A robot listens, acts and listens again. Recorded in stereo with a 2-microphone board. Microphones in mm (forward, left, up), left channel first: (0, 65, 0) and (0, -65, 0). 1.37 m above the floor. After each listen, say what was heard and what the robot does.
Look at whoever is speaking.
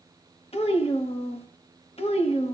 The child speaking: about 50° left or 130° left. Turn 50° left.
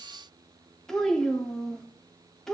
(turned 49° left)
Facing the child speaking, 1 to 2 m away.